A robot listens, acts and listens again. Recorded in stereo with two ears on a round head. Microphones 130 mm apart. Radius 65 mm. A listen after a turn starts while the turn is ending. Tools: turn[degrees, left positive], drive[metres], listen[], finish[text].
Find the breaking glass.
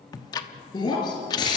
Thought: The breaking glass: about 30° left or 150° left.
Action: turn[30]
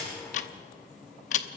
Action: listen[]
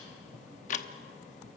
Action: finish[I heard breaking glass, but can't make it out now. It was about straight ahead or 120° left.]